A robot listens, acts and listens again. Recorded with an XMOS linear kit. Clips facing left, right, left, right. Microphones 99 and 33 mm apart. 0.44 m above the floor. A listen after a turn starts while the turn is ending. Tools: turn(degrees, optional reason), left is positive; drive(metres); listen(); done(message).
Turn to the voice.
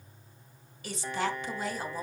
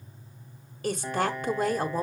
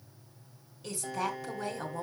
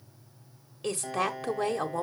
turn(degrees=-50, reason="The woman speaking: about 50° right or 130° right.")
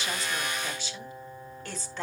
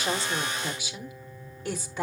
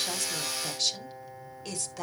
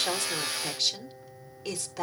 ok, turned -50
turn(degrees=-10, reason="So it is at 10° right.")
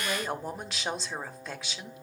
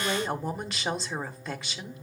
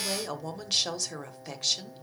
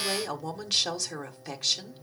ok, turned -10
done("Facing the woman speaking, 1 to 2 m away.")